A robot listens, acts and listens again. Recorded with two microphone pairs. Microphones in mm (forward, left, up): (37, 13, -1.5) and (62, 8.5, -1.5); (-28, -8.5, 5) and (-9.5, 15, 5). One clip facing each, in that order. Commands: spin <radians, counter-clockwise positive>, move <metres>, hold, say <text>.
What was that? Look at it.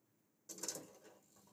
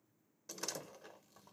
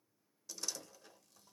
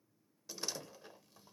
spin -0.17
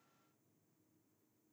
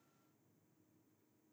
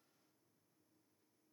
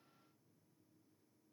say I heard a door slam from this way, but can't make it out now.